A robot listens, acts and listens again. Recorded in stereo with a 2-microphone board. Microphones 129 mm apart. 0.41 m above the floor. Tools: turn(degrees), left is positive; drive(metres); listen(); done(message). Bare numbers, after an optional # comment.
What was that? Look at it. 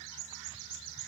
listen()
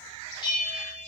# The bell: about 35° left or 145° left.
turn(35)
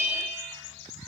# So it is at 105° left.
turn(105)
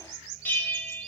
# The bell is now 15° left.
turn(15)
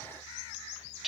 done("Found it: a bell, straight ahead, 1 to 2 m away.")